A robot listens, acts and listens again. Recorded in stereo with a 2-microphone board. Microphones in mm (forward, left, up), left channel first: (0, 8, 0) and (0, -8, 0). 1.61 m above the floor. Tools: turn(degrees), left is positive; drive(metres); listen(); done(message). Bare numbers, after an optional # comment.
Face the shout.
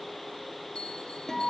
listen()
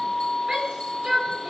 turn(-90)
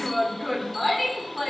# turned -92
done("Found it: a shout, straight ahead.")